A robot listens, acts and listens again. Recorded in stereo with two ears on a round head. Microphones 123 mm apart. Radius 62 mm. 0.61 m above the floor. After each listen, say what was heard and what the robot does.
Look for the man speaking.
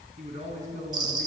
The man speaking: about 65° right or 115° right. Turn 65° right.
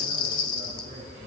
Keep listening.
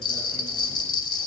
Keep listening.
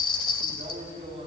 So it is at 40° right. Turn 40° right.
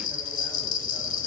Keep listening.
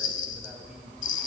Keep listening.
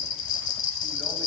Facing where the man speaking came from. I can't hear it now.